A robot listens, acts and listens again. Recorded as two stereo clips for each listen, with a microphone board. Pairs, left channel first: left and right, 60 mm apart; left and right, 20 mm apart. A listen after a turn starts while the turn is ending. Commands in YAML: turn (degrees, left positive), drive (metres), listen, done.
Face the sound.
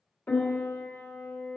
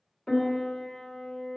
turn: 30
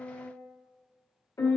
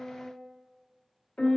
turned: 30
turn: 120
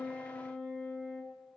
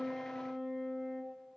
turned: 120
turn: 30
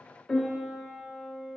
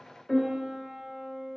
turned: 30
done: "Facing the piano."